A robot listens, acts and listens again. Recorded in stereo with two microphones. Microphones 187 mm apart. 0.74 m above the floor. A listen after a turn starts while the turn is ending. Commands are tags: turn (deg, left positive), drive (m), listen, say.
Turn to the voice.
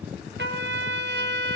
<listen/>
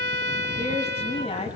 <turn deg="35"/>
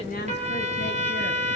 <listen/>
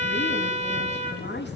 <turn deg="110"/>
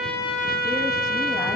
<listen/>
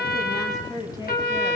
<turn deg="20"/>
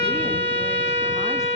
<listen/>
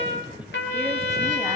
<listen/>
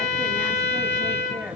<say>I heard a woman speaking from this way, but can't make it out now.</say>